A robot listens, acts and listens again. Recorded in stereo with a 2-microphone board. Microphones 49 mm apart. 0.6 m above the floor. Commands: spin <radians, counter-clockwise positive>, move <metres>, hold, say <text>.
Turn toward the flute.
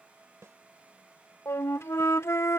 spin 1.13
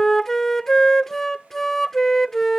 spin 0.17
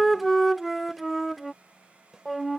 say Facing the flute.